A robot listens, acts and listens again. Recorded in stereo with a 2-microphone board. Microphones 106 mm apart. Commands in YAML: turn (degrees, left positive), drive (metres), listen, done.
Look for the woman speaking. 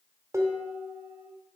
listen: true
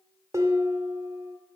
listen: true
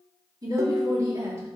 turn: -25
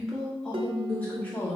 turn: 20
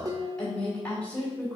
turn: 10
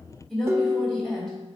done: "Found it: a woman speaking, straight ahead."